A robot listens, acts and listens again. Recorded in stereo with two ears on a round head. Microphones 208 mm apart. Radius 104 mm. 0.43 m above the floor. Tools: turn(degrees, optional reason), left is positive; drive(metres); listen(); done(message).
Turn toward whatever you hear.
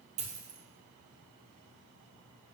turn(degrees=-30, reason="The dropped coin: about 30° right or 150° right.")
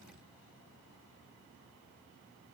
listen()
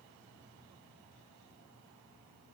done("I heard a dropped coin, but can't make it out now. It was about straight ahead or 120° right.")